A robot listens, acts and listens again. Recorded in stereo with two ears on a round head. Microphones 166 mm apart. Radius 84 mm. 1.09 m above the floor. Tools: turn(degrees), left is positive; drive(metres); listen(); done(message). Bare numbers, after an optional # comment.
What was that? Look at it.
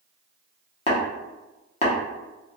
# The tapping: about 35° left or 145° left.
turn(35)
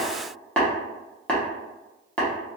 # So it is at 10° left.
turn(10)
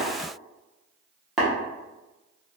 done("Facing the tapping, under 1 m away.")